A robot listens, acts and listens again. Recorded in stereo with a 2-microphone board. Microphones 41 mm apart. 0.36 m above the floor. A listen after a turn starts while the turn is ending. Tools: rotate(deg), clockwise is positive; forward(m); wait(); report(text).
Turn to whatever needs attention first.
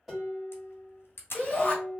rotate(-30)
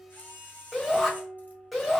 report("Facing the shout, 1 to 2 m away.")